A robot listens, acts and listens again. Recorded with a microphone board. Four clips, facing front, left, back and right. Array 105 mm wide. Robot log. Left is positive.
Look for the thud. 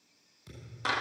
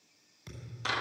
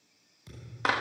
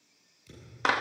note: The thud: 100° left.
cmd yaw +100
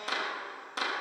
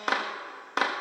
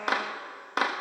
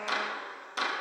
end: Facing where the thud came from. I can't hear it now.